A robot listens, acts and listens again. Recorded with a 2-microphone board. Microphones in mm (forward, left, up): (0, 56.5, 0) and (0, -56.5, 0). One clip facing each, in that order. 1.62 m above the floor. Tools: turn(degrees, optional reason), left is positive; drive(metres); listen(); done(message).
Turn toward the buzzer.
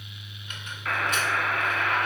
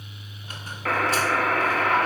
turn(degrees=-70, reason="The buzzer: about 70° right or 110° right.")
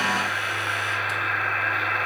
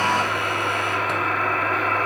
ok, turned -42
turn(degrees=-50, reason="So it is at 50° right.")
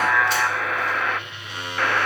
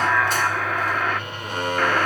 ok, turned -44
done("Facing the buzzer.")